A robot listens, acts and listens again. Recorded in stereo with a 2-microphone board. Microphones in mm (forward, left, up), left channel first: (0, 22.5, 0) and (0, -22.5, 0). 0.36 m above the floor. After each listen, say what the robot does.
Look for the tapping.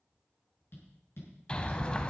Turn 55° left.
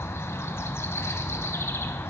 Keep listening.
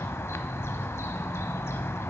Keep listening.
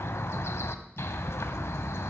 I heard tapping, but can't make it out now. It was about straight ahead or 70° left.